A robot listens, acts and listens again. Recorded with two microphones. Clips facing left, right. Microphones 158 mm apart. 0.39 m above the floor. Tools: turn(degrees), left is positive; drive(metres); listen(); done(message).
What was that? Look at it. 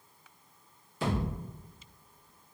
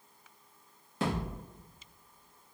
turn(degrees=-90)
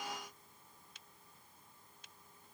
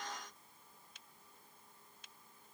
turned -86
done("Facing where the thud came from. I can't hear it now.")